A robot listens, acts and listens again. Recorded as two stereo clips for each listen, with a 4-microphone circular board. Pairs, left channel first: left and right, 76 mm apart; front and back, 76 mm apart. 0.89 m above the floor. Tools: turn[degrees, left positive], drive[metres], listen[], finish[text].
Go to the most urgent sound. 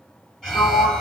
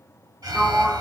Thought: The alarm: 165° left.
Action: turn[165]
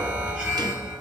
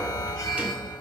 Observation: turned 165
Thought: The alarm is now 35° right.
Action: turn[-35]
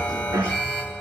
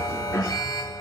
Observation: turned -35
Thought: The alarm is now 20° left.
Action: turn[20]
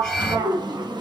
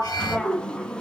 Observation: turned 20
Action: drive[1.0]
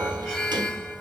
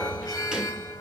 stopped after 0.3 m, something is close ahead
Thought: The alarm is now 10° right.
Action: turn[-10]
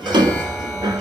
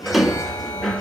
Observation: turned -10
Action: finish[Blocked. The alarm is further on, straight ahead.]